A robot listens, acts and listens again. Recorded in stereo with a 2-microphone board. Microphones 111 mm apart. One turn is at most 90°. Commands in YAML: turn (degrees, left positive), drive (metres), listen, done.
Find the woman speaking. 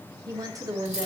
turn: -30
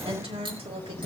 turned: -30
turn: -90
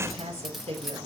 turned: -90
turn: -70
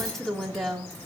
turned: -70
done: "Facing the woman speaking."